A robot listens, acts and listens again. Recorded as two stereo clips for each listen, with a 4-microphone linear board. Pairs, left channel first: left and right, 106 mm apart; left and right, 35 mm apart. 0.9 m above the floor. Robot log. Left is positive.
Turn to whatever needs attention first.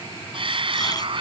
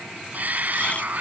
note: The shout: about 50° right or 130° right.
cmd yaw -50
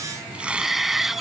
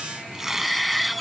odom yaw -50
end: Found it: a shout, straight ahead.